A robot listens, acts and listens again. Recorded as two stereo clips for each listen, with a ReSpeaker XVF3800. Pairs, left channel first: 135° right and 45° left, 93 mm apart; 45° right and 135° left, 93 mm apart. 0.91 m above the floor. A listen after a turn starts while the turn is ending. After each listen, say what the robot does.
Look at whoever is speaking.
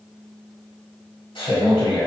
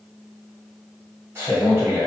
Turn 160° right.
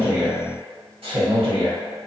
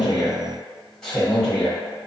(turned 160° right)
Turn 40° left.
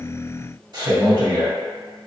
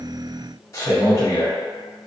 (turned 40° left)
Turn 10° left.
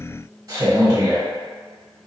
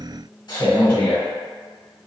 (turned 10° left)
Facing the man speaking.